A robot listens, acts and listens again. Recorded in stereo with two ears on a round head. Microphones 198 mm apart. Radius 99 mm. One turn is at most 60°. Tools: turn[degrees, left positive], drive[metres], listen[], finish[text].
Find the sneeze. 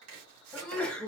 Action: turn[30]
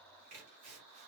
Action: listen[]
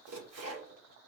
Action: finish[I heard a sneeze, but can't make it out now. It was about 25° right or 145° left.]